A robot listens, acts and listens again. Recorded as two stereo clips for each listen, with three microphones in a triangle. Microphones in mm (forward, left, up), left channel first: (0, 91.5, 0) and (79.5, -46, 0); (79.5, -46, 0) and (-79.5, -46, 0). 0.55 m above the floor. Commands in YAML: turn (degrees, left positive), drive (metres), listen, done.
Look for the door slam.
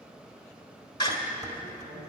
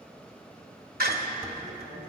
turn: 180
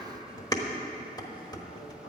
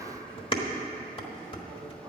done: "Facing where the door slam came from. I can't hear it now."